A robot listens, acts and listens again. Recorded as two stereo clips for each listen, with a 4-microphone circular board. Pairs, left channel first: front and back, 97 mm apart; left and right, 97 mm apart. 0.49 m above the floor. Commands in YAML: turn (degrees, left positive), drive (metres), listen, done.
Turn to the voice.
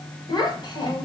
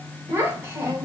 turn: -35
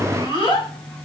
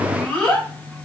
turn: 15
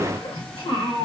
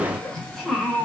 done: "Found it: a child speaking, straight ahead, 1 to 2 m away."